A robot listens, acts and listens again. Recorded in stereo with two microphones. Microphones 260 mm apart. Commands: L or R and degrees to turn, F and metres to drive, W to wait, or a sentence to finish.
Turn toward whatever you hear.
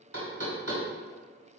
R70
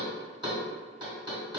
R20
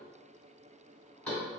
Found it: knocking, straight ahead.